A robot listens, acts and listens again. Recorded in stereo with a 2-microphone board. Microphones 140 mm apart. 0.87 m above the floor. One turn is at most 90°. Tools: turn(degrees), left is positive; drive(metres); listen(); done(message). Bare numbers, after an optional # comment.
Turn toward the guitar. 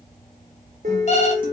turn(-90)
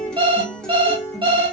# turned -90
done("Found it: a guitar, straight ahead, 1 to 2 m away.")